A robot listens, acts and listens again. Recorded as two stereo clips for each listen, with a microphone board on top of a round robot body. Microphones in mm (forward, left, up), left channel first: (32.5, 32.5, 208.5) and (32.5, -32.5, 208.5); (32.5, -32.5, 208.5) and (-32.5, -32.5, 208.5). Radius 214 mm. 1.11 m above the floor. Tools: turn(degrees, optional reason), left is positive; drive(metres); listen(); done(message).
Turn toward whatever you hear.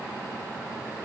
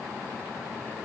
listen()
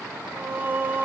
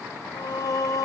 turn(degrees=-25, reason="The singing: 25° right.")
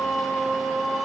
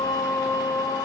done("Found it: singing, straight ahead, 1 to 2 m away.")